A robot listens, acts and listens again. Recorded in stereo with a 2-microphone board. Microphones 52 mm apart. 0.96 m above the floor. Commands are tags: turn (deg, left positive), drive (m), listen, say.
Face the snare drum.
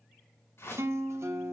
<listen/>
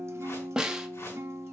<turn deg="-15"/>
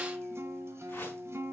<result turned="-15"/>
<listen/>
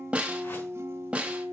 <turn deg="-155"/>
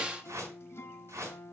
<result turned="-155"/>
<turn deg="-20"/>
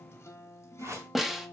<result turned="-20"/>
<say>Facing the snare drum, 1 to 2 m away.</say>